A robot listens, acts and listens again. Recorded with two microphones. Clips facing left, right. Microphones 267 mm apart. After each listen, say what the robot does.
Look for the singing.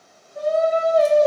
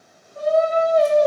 Turn 30° left.
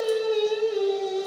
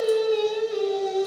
Turn 30° right.
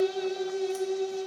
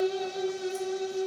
Turn 110° right.
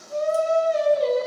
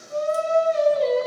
Turn 15° left.
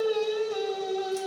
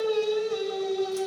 Found it: singing, straight ahead, 2 to 4 m away.